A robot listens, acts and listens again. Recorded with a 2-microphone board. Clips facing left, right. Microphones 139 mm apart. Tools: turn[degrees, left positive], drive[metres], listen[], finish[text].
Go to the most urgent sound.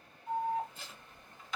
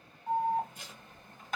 Thought: The alarm: about 50° right or 130° right.
Action: turn[-50]
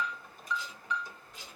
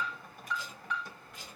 Thought: So it is at 75° right.
Action: turn[-75]
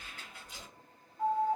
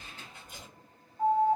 Thought: The alarm is now 25° right.
Action: turn[-25]
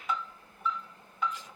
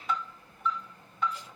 Action: drive[1.0]
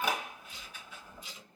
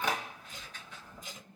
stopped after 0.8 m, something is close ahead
Thought: The alarm is now 10° left.
Action: turn[10]
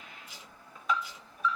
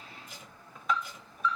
Action: finish[Arrived at the alarm, straight ahead.]